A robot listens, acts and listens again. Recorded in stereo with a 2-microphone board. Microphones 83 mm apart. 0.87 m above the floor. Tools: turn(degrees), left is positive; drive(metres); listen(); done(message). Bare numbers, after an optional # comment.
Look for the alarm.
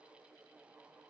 listen()
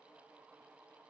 listen()
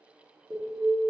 turn(30)
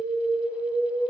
# So it is at 15° right.
turn(-15)
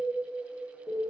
done("Facing the alarm.")